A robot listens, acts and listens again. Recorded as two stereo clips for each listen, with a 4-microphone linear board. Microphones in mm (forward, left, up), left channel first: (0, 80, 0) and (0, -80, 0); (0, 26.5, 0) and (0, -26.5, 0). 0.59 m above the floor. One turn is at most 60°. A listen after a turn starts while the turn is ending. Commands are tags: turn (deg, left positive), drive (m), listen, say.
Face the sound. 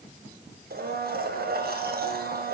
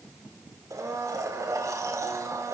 <turn deg="-60"/>
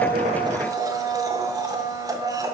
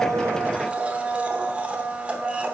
<turn deg="-25"/>
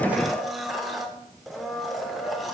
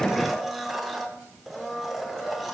<say>Found it: a blender, straight ahead, under 1 m away.</say>